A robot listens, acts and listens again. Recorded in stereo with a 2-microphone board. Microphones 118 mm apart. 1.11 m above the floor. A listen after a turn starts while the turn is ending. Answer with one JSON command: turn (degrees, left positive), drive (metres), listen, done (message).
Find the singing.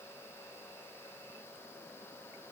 {"listen": true}
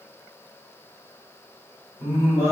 {"turn": 25}
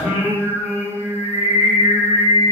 {"turn": 120}
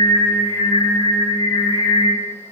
{"turn": 20}
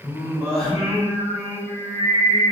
{"done": "Facing the singing."}